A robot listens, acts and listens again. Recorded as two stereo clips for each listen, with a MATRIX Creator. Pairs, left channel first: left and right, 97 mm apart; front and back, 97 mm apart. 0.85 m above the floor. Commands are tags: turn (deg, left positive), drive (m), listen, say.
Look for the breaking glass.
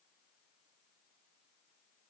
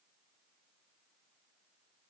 <listen/>
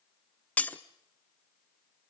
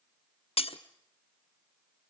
<turn deg="15"/>
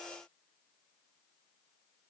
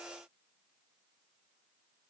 <say>I heard breaking glass from this way, but can't make it out now.</say>